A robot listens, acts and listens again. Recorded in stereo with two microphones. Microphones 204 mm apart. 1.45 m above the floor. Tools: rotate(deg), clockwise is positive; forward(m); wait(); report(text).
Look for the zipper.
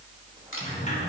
wait()
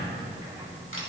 wait()
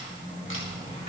report("I can't make out a zipper to turn to.")